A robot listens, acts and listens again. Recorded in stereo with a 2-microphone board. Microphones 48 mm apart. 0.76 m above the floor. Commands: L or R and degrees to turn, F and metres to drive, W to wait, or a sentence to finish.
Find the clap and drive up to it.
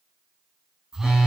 W
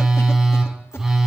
W
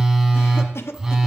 I can't make out a clap, only a phone buzzing and a cough.